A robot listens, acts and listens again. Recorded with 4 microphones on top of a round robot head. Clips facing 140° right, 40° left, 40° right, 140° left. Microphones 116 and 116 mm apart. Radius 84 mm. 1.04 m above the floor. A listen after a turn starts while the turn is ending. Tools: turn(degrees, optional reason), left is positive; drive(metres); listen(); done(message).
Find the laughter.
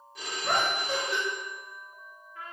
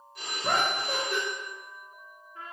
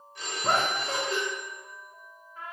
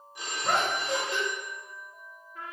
done("Found it: laughter, straight ahead.")